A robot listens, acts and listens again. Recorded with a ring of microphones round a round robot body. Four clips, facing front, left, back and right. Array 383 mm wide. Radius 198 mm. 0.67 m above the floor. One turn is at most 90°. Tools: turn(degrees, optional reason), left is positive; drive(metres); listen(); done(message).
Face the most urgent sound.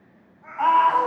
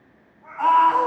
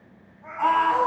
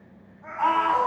done("Found it: a scream, straight ahead.")